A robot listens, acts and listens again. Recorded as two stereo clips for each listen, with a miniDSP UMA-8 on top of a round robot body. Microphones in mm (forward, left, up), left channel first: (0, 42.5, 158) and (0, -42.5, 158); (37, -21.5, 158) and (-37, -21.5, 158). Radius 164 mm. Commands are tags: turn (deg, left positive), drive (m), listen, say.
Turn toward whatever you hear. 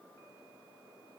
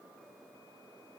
<listen/>
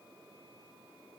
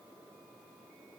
<listen/>
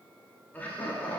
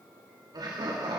<turn deg="160"/>
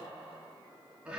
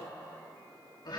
<turn deg="-15"/>
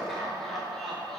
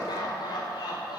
<say>Found it: laughter, straight ahead, 2 to 4 m away.</say>